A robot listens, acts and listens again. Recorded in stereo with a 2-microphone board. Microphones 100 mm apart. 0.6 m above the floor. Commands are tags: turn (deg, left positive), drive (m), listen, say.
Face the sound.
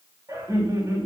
<turn deg="-40"/>
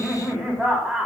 <turn deg="-10"/>
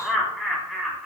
<say>Facing the laughter, over 4 m away.</say>